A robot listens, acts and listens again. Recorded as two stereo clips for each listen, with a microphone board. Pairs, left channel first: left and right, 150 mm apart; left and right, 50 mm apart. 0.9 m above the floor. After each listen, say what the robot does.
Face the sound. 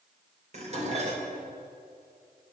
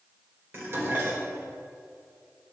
Turn 45° right.
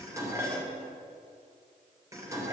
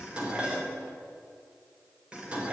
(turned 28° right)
Turn 20° right.
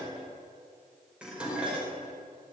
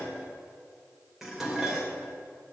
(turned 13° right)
Facing the dishes clattering, 2 to 4 m away.